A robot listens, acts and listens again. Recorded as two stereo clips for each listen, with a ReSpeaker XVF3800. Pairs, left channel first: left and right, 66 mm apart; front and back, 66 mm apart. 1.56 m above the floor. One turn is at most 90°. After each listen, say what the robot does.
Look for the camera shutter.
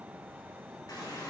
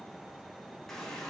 Keep listening.
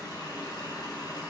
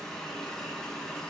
Keep listening.
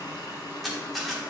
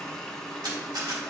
Turn 90° left.
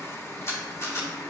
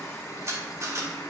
Turn 90° left.
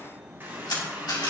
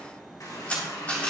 Turn 65° left.
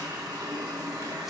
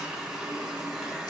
Keep listening.
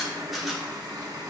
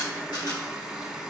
Found it: a camera shutter, straight ahead.